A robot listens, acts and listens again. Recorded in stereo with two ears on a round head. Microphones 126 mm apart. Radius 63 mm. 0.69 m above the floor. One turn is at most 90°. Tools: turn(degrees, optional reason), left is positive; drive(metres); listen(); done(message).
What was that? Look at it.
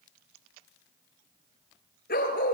turn(degrees=70, reason="The dog barking: about 70° left or 110° left.")
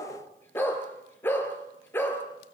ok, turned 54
turn(degrees=15, reason="So it is at 15° left.")
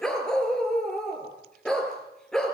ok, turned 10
done("Found it: a dog barking, straight ahead.")